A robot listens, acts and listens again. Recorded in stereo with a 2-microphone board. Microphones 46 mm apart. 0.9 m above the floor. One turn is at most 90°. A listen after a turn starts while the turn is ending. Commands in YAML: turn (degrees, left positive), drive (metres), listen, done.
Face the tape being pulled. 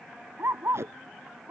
turn: -90
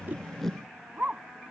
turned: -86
listen: true
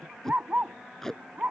turn: 10
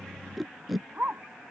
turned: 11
done: "Found it: tape being pulled, straight ahead."